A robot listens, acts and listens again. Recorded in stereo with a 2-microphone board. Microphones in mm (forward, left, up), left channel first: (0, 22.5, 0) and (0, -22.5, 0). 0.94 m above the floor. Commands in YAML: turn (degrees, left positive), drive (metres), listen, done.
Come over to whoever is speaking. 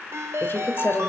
turn: 55
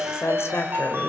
turn: 65
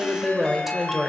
drive: 1.0
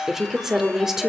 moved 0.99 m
turn: -10
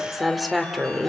drive: 1.0
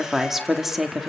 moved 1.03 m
drive: 1.0
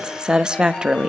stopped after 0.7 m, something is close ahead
turn: -15
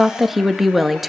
done: "Arrived at the woman speaking, straight ahead."